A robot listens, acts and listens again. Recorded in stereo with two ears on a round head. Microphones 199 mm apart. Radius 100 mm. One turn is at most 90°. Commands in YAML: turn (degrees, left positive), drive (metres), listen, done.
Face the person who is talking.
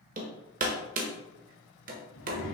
turn: 60
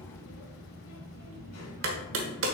turn: 60
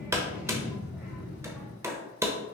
done: "Facing the child speaking."